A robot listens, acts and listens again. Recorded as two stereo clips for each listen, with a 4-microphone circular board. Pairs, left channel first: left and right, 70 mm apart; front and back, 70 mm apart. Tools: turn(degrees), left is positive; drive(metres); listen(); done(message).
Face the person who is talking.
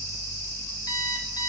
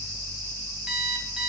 listen()
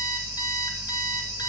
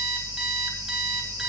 listen()
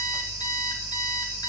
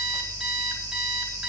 done("I can't make out anyone speaking, only an alarm clock.")